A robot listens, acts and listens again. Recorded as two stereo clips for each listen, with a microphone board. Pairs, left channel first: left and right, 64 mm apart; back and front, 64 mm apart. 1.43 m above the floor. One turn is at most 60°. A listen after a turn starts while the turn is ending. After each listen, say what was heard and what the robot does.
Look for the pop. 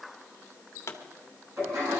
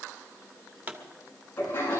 The pop: 60° left. Turn 60° left.
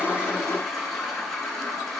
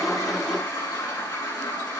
I heard a pop from this way, but can't make it out now.